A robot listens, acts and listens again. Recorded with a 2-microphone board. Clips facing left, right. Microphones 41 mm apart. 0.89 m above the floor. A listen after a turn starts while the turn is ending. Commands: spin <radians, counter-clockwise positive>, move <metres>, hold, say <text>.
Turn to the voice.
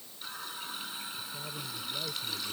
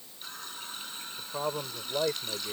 spin -1.57
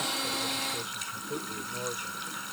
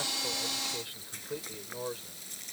say Found it: a man speaking, straight ahead.